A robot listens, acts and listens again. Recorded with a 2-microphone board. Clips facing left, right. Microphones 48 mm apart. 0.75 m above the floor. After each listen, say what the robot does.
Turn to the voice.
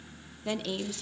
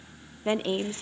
Turn 30° right.
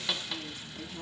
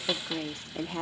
Turn 120° right.
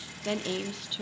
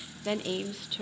Facing the woman speaking.